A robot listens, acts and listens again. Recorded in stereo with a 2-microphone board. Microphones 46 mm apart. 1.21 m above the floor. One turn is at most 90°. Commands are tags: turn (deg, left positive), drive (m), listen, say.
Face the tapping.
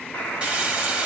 <listen/>
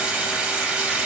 <listen/>
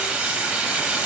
<say>I can't make out tapping, only frying.</say>